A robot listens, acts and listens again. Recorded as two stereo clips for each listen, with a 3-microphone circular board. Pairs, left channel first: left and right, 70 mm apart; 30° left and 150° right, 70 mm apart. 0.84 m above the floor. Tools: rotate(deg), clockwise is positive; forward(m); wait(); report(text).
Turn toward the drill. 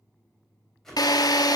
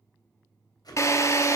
rotate(-70)
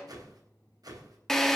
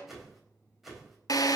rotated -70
report("Facing the drill.")